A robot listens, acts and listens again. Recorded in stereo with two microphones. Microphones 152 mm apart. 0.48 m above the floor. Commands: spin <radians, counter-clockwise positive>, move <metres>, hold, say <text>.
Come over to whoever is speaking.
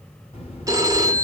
spin 0.79
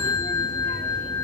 hold
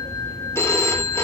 spin 1.57
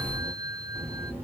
spin -0.26
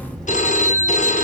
move 1.0
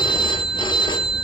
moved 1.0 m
move 1.0
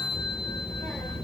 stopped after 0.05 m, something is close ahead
say Arrived at the child speaking, straight ahead.